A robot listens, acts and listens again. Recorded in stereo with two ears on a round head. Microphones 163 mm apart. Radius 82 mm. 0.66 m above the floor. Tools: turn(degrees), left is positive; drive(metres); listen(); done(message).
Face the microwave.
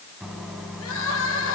turn(degrees=30)
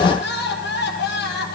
listen()
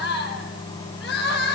turn(degrees=155)
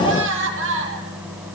turn(degrees=-10)
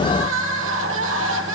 listen()
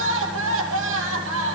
listen()
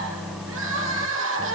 done("Found it: a microwave, straight ahead, 2 to 4 m away.")